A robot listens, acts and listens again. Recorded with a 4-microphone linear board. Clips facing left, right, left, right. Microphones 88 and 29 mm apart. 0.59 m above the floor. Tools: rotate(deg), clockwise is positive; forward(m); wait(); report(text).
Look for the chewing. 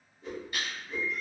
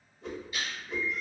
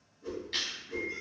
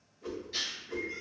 rotate(-60)
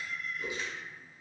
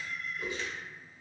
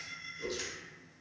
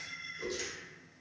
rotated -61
wait()
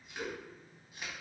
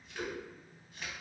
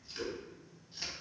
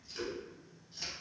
rotate(-10)
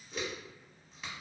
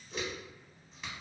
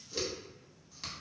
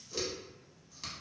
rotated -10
report("Found it: chewing, straight ahead.")